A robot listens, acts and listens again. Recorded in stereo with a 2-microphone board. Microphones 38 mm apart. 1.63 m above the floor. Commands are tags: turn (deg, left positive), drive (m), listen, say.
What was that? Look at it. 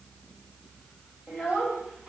<turn deg="-30"/>
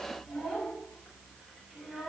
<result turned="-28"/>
<turn deg="-20"/>
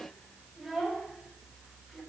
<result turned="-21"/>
<turn deg="-15"/>
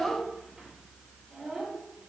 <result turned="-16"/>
<turn deg="-15"/>
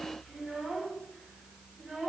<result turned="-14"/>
<say>Found it: a child speaking, straight ahead, 2 to 4 m away.</say>